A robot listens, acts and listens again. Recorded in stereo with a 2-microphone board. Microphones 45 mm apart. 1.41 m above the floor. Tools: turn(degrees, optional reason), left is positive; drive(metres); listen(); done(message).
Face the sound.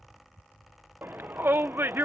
turn(degrees=-60, reason="The shout: about 60° right or 120° right.")
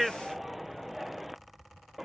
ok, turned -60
done("Facing the shout.")